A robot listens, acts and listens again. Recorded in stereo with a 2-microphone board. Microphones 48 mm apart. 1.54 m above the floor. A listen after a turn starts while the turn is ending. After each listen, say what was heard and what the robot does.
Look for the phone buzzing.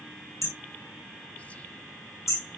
Keep listening.
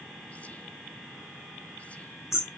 Keep listening.
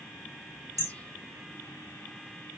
I can't make out a phone buzzing to turn to.